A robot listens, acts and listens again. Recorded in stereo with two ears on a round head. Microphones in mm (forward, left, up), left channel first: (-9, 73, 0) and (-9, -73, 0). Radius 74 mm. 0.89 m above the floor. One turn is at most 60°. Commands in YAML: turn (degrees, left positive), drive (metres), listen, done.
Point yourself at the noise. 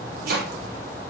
turn: -60
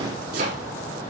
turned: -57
turn: -60
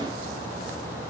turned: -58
listen: true
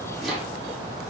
done: "Found it: chopping, straight ahead."